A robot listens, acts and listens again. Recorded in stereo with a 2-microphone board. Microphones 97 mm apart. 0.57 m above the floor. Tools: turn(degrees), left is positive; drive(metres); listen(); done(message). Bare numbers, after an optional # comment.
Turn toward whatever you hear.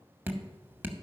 # The dripping: about 25° right or 155° right.
turn(-25)
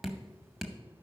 done("Facing the dripping, under 1 m away.")